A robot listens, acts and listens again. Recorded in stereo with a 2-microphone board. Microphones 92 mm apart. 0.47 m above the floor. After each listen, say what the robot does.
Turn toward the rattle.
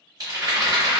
Turn 40° right.
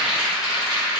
Found it: a rattle, straight ahead, 1 to 2 m away.